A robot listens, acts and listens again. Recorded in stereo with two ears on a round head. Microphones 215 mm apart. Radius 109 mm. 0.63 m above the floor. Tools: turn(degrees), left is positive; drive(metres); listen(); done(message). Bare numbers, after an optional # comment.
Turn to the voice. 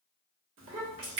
# The child speaking: about 60° right or 120° right.
turn(-60)
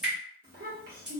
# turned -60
# So it is at 45° right.
turn(-45)
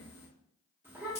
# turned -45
# The child speaking is now 10° right.
turn(-10)
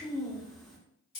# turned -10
done("Facing the child speaking.")